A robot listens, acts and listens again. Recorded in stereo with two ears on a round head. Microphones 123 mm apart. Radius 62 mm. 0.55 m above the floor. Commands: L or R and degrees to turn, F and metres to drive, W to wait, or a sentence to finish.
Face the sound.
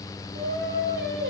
R90
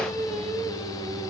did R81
Facing the singing.